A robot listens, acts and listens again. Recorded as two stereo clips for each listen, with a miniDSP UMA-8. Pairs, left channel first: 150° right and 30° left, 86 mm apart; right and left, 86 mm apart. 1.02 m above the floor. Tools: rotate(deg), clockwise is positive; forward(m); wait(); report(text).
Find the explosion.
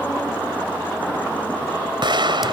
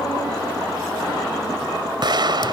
rotate(-55)
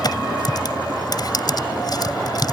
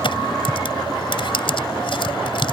report("Facing where the explosion came from. I can't hear it now.")